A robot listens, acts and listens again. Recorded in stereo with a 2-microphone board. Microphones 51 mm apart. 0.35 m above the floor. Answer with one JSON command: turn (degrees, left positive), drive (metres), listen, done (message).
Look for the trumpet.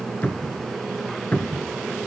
{"listen": true}
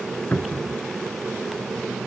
{"listen": true}
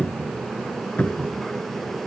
{"done": "I can't make out a trumpet to turn to."}